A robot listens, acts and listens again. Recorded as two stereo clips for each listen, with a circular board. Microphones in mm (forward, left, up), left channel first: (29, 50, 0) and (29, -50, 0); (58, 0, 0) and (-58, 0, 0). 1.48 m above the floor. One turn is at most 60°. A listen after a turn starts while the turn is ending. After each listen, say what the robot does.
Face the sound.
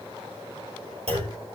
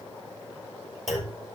Turn 60° right.
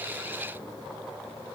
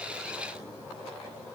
Turn 30° right.
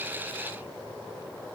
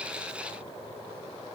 I heard a clunk from this way, but can't make it out now.